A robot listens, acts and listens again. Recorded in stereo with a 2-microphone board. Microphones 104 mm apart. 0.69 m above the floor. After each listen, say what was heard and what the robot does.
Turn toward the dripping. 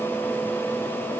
Keep listening.
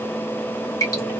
The dripping: about 30° left or 150° left. Turn 30° left.
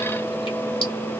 Keep listening.
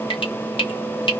So it is at 115° left. Turn 115° left.
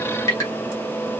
The dripping is now 30° left. Turn 30° left.
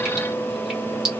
Facing the dripping, 1 to 2 m away.